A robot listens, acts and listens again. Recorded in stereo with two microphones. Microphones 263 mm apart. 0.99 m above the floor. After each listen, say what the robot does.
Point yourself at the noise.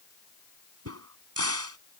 Turn 65° right.
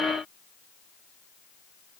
Keep listening.
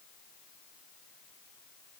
I heard a crack, but can't make it out now. It was about straight ahead or 50° right.